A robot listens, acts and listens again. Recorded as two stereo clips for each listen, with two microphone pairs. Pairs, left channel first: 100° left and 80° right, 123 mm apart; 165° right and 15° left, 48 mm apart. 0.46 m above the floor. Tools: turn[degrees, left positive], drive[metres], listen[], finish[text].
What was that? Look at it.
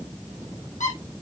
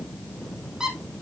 Thought: The squeak: 90° left.
Action: turn[90]
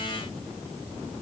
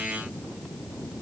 Action: listen[]
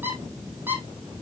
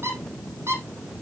Thought: The squeak is now 10° right.
Action: turn[-10]
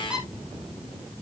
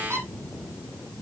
Action: finish[Facing the squeak, 2 to 4 m away.]